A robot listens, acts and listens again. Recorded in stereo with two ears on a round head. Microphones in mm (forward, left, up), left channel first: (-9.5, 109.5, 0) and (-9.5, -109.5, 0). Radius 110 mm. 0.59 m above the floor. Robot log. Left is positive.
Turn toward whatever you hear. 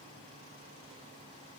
cmd idle
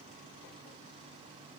cmd idle
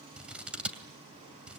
cmd yaw -30
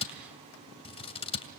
note: So it is at 25° left.
cmd yaw +25
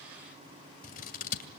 note: The scissors is now 35° left.
cmd yaw +35
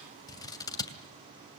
note: The scissors is now 15° left.
cmd yaw +15
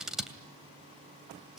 end: Found it: scissors, straight ahead.